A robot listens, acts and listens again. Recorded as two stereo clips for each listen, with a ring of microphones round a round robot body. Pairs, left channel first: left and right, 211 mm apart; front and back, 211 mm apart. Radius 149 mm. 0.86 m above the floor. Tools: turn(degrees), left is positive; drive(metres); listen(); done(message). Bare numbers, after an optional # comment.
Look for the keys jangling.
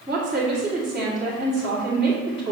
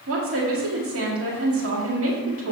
listen()
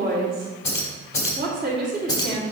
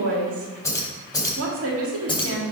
# The keys jangling: 65° left.
turn(65)
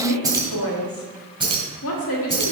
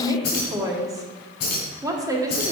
# The keys jangling is now 25° right.
turn(-25)
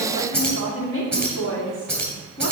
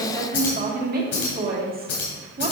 done("Facing the keys jangling.")